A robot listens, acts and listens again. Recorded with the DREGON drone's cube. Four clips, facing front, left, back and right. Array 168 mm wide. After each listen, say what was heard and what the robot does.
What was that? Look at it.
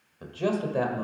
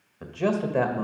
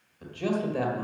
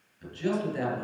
The man speaking: 80° left. Turn 80° left.
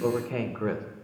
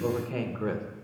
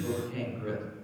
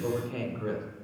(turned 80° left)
The man speaking is now 25° left. Turn 25° left.
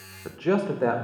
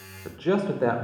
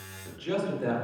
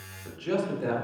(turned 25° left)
The man speaking is now 45° left. Turn 45° left.
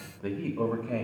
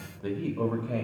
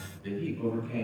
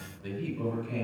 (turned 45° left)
The man speaking is now 40° left. Turn 40° left.
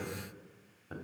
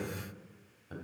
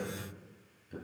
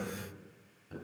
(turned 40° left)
The man speaking is now 15° left. Turn 15° left.
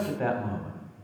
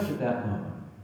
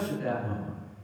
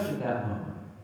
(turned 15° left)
Found it: a man speaking, straight ahead, 2 to 4 m away.